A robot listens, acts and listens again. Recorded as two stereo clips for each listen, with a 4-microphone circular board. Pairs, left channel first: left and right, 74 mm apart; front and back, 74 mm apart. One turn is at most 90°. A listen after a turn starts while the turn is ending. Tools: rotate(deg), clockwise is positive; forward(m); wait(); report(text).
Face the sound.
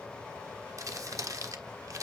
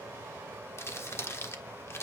rotate(50)
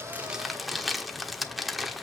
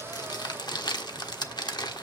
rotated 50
report("Facing the crumpling, 1 to 2 m away.")